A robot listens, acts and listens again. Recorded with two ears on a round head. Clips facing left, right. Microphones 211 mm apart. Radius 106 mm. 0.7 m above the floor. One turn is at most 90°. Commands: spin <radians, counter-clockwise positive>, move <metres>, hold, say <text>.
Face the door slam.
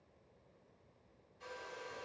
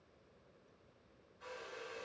hold
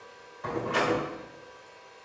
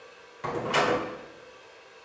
spin -0.70
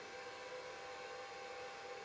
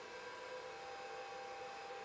hold
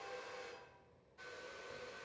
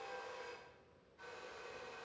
say I heard a door slam, but can't make it out now. It was about straight ahead or 100° right.